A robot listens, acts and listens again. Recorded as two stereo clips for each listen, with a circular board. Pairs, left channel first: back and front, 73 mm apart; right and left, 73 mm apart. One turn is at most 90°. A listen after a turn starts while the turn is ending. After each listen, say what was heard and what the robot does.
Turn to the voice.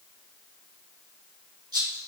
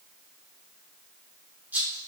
Keep listening.
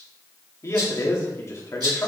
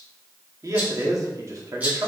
The man speaking: 130° left. Turn 90° left.
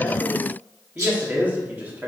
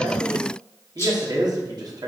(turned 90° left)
The man speaking is now 65° left. Turn 65° left.
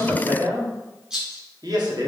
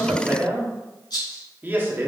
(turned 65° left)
The man speaking is now 25° left. Turn 25° left.
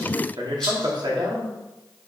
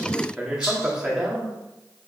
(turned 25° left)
The man speaking is now 10° left. Turn 10° left.
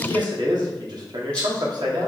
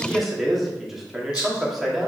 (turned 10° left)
Found it: a man speaking, straight ahead, 1 to 2 m away.